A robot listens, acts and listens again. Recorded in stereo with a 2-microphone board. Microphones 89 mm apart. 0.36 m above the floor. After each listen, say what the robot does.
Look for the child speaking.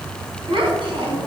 Turn 75° right.
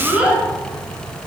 Turn 15° right.
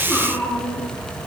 Keep listening.
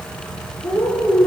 Turn 10° left.
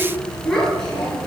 Found it: a child speaking, straight ahead, over 4 m away.